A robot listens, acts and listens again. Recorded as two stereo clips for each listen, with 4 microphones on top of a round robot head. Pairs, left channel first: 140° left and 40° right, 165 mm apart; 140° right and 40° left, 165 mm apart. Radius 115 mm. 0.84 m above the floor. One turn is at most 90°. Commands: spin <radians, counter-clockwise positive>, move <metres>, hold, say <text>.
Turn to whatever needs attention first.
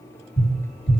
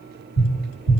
hold
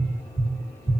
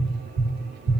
hold
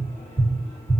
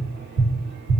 say I can't make out anything urgent, only tapping.